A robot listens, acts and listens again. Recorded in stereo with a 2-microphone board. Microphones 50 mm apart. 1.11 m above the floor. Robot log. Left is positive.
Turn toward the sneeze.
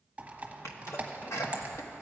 note: The sneeze: about 70° left or 110° left.
cmd yaw +70
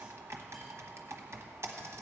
cmd idle
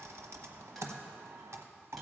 end: I heard a sneeze, but can't make it out now. It was about straight ahead or 40° left.